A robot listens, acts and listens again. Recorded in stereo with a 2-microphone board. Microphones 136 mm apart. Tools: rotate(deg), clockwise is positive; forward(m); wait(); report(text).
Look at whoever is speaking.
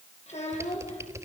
rotate(-55)
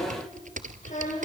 rotate(-70)
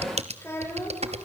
rotate(-20)
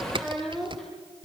report("Found it: a child speaking, straight ahead.")